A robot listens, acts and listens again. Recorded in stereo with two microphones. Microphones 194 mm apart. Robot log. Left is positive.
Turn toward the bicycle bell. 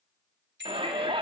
note: The bicycle bell: about 65° right or 115° right.
cmd yaw -65
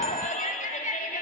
cmd idle
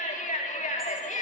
cmd idle
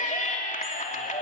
end: I heard a bicycle bell, but can't make it out now. It was about straight ahead or 50° right.